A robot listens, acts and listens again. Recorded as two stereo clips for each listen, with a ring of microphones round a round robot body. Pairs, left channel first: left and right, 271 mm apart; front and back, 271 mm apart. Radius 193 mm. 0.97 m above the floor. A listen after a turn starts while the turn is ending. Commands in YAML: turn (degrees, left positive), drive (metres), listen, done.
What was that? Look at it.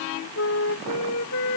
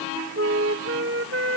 turn: 145
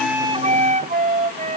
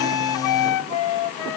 turn: -30
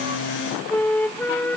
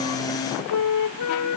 done: "Found it: a flute, straight ahead."